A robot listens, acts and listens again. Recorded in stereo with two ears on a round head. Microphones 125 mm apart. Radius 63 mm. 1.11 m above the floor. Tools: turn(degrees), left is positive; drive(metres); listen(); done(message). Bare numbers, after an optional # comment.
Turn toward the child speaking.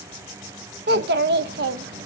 turn(-90)
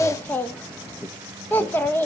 # So it is at 15° left.
turn(15)
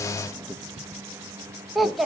done("Found it: a child speaking, straight ahead.")